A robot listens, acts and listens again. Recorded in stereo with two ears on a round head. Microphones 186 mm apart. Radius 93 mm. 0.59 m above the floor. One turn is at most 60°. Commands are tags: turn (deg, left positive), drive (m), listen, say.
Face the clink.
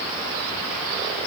<listen/>
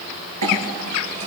<turn deg="-60"/>
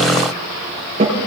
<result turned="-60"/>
<turn deg="-30"/>
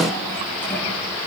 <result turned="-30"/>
<listen/>
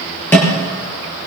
<turn deg="10"/>
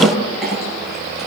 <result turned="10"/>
<say>Found it: a clink, straight ahead, over 4 m away.</say>